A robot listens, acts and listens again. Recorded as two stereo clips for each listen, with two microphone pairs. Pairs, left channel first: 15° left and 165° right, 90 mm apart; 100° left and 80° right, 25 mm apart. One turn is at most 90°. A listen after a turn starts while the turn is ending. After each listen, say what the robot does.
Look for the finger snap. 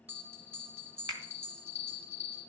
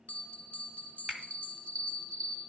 Turn 90° right.
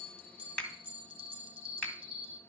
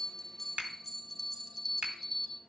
Turn 65° right.
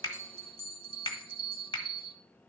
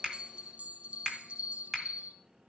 Facing the finger snap, 1 to 2 m away.